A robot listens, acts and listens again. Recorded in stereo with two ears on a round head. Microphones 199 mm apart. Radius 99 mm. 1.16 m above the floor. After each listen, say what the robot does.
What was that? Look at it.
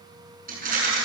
Turn 40° right.
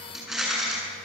Found it: a rattle, straight ahead.